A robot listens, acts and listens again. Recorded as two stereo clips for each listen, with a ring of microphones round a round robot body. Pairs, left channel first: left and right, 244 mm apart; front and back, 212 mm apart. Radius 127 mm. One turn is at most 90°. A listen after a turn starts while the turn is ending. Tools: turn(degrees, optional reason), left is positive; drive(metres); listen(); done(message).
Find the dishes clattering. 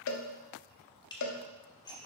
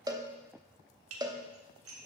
turn(degrees=90, reason="The dishes clattering: 165° left.")
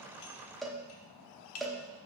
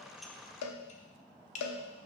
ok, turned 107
turn(degrees=55, reason="The dishes clattering is now 55° left.")
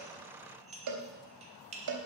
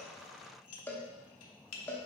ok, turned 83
turn(degrees=-25, reason="The dishes clattering is now 25° right.")
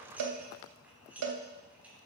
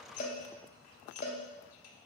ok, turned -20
done("Found it: dishes clattering, straight ahead, 1 to 2 m away.")